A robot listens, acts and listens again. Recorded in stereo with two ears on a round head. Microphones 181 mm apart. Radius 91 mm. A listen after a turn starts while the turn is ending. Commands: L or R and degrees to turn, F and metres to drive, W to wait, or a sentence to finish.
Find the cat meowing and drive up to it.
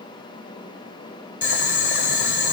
W
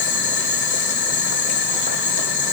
W
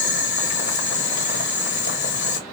I can't make out a cat meowing, only boiling.